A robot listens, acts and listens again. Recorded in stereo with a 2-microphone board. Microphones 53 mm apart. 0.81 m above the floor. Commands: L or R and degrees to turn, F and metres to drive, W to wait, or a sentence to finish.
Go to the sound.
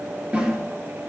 R15
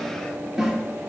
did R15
F1.0
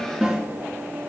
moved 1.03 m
F1.0
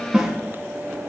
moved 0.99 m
F1.0
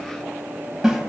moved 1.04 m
R10
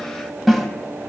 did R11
F1.0
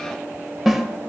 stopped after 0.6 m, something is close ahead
Arrived at the snare drum, straight ahead.